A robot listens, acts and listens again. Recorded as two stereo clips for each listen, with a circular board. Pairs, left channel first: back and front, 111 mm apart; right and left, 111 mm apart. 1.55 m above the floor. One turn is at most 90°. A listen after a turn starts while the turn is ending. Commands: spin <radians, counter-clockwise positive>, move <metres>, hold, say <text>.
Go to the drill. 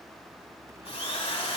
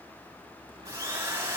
spin 1.57
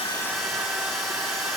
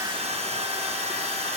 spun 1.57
spin 1.48
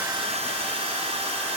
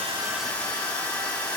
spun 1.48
spin -0.26
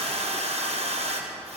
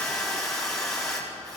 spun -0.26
move 1.0
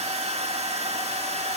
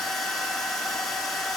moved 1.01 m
move 1.0
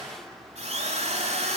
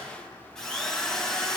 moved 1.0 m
move 1.0
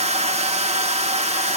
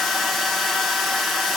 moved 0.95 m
move 1.0
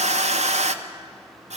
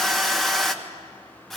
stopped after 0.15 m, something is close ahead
say Arrived at the drill, straight ahead.